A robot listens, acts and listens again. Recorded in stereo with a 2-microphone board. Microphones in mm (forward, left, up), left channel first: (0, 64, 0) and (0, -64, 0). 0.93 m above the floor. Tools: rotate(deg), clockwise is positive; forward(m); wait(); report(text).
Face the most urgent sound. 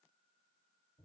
wait()
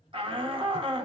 rotate(45)
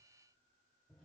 wait()
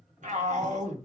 rotate(90)
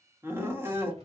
rotate(20)
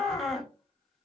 report("Found it: a shout, straight ahead.")